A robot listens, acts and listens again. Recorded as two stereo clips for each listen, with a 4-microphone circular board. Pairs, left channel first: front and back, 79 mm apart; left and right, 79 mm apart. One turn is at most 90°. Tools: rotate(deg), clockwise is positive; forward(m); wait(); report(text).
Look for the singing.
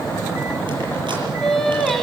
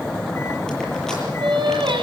rotate(85)
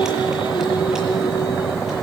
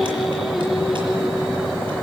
report("Found it: singing, straight ahead.")